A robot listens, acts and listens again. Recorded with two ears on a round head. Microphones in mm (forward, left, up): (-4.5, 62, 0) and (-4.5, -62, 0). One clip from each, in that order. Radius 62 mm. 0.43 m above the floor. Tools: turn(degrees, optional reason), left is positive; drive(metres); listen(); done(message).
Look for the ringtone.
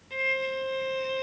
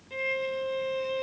listen()
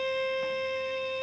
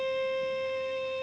listen()
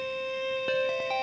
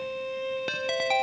turn(degrees=-60, reason="The ringtone: about 60° right or 120° right.")
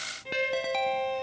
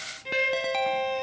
done("Found it: a ringtone, straight ahead.")